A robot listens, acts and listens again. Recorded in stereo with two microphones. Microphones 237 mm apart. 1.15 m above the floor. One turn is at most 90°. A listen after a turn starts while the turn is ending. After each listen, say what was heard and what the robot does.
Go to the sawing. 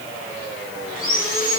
The sawing: about 35° left or 145° left. Turn 35° left.
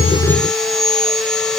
Drive 1.0 m forward.
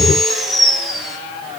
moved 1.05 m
Drive 1.0 m forward.
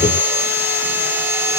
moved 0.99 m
The sawing is now 10° right. Turn 10° right.
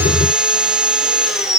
Drive 1.0 m forward.
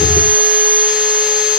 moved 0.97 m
Drive 1.0 m forward.
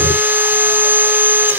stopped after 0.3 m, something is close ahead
The sawing is now 10° right. Turn 10° right.
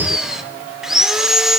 Arrived at the sawing, straight ahead.